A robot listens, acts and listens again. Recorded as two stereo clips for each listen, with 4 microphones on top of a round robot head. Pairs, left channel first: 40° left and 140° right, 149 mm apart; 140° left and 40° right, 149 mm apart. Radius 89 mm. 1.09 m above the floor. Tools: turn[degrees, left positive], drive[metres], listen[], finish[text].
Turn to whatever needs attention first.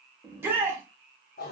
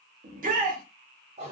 Thought: The shout: 65° right.
Action: turn[-65]
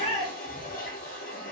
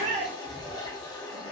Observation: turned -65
Action: finish[Found it: a shout, straight ahead, 1 to 2 m away.]